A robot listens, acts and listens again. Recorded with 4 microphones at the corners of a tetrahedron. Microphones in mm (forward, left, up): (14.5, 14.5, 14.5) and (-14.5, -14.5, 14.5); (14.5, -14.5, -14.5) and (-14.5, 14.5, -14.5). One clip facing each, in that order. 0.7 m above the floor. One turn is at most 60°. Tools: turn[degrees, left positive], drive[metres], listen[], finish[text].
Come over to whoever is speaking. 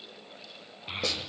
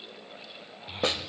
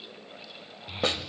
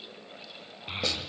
Thought: The child speaking: 95° left.
Action: turn[60]
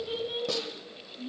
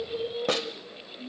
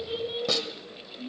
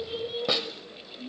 Thought: The child speaking is now 30° left.
Action: turn[30]
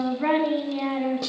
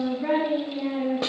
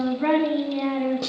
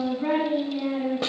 Action: drive[1.0]
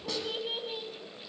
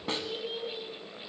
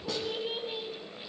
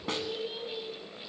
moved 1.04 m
Thought: The child speaking is now 10° left.
Action: turn[10]
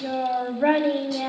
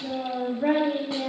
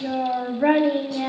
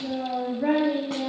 Action: drive[1.0]
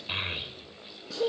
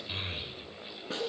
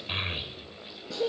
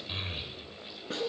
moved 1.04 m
Action: drive[1.0]
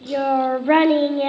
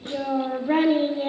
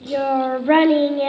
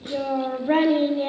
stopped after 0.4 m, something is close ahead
Action: finish[I am next to the child speaking.]